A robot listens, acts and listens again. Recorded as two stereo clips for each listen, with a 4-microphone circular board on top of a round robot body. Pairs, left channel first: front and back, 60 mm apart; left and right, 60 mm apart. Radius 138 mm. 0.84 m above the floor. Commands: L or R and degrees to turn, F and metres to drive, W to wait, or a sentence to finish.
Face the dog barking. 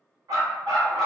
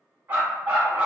R155
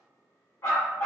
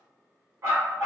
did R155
R50
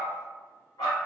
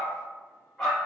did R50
Found it: a dog barking, straight ahead.